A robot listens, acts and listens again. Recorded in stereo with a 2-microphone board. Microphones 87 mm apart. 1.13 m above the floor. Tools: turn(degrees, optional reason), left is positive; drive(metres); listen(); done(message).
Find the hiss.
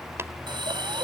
turn(degrees=-65, reason="The hiss: about 65° right or 115° right.")
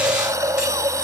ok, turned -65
turn(degrees=-40, reason="So it is at 40° right.")
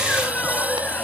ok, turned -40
turn(degrees=-20, reason="The hiss is now 20° right.")
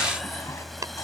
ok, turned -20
listen()
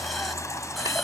done("Found it: a hiss, straight ahead.")